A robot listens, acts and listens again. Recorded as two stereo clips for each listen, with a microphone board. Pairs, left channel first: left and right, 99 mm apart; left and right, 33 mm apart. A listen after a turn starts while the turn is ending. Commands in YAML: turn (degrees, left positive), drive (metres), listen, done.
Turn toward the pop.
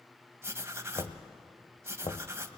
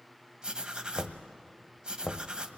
listen: true
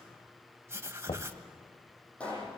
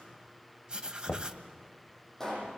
turn: 30
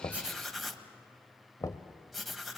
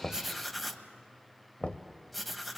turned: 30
listen: true
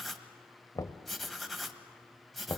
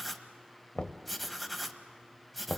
done: "I heard a pop, but can't make it out now. It was about 20° right or 140° left."